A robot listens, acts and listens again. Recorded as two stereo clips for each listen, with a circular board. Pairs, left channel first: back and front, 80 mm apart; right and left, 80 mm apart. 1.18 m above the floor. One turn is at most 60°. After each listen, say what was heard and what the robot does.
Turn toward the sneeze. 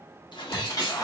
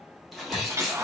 The sneeze: straight behind. Turn 60° left.
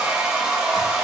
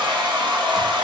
Nothing new. It was at 120° left. Turn 60° left.
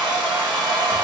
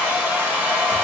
Nothing new. It was at 60° left. Turn 60° left.
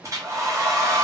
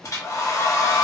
I heard a sneeze from this way, but can't make it out now.